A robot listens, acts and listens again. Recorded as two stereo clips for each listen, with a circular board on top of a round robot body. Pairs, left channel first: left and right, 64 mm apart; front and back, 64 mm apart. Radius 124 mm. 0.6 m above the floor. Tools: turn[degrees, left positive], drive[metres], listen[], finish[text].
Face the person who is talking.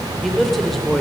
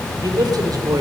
Thought: The man speaking: straight behind.
Action: turn[180]
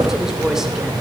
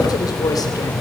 Thought: The man speaking is now 10° right.
Action: turn[-10]
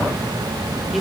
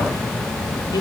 Action: listen[]
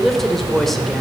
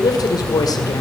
Action: finish[Facing the man speaking, 2 to 4 m away.]